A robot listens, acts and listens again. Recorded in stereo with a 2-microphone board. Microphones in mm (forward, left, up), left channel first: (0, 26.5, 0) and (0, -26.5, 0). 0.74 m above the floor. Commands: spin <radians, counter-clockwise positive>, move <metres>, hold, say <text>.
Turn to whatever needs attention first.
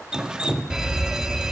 spin -0.52
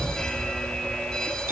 spin 0.35
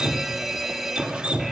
say Facing the fire alarm, 2 to 4 m away.